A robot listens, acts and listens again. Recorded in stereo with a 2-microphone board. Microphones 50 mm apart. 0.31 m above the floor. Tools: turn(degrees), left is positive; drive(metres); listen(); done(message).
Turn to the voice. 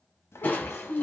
turn(degrees=60)
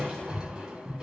listen()
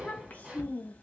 turn(degrees=35)
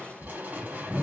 listen()
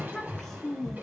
turn(degrees=10)
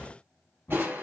listen()
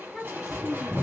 done("Found it: a child speaking, straight ahead, 1 to 2 m away.")